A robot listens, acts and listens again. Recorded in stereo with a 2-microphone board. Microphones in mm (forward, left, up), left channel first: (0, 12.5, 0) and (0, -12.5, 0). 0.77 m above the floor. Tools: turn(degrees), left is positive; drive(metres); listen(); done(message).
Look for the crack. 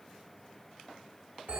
listen()
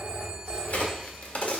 turn(degrees=90)
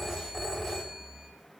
done("I heard a crack from this way, but can't make it out now.")